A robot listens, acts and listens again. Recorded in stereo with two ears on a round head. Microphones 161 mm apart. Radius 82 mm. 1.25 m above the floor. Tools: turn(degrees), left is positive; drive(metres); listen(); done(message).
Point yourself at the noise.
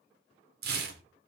turn(degrees=-60)
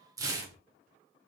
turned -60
turn(degrees=-25)
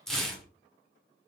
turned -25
done("Found it: tearing paper, straight ahead.")